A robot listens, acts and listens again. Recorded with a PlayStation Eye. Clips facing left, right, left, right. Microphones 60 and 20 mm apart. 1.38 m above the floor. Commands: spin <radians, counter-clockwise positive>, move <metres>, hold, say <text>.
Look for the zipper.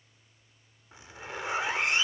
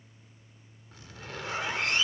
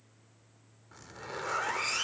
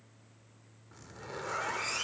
spin 0.35
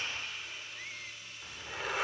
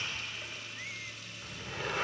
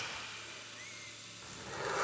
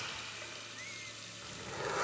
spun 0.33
say Facing the zipper.